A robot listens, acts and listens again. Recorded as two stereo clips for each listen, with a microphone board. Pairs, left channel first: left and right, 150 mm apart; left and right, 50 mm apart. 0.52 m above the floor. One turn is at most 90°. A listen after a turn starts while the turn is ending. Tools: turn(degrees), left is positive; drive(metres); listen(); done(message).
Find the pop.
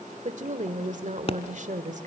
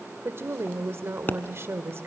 turn(degrees=40)
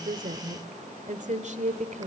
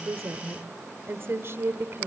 listen()
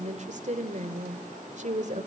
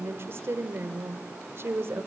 done("I heard a pop, but can't make it out now. It was about straight ahead or 100° left.")